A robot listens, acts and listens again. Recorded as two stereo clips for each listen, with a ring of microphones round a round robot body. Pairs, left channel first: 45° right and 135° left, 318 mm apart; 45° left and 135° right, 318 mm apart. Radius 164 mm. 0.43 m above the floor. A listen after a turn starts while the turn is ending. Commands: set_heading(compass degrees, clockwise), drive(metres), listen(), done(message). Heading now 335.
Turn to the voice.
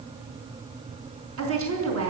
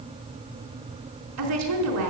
set_heading(150)
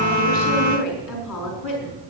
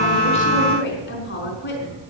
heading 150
set_heading(160)
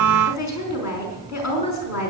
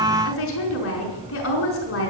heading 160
done("Found it: a woman speaking, straight ahead.")